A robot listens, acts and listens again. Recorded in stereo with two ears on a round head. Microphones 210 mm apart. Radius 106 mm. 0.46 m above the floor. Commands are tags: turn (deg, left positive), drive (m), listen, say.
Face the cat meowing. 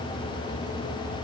<listen/>
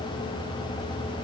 <listen/>
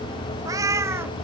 <turn deg="-30"/>
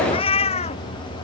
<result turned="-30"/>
<turn deg="25"/>
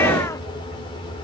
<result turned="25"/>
<listen/>
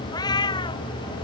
<turn deg="20"/>
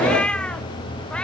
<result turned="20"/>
<say>Facing the cat meowing.</say>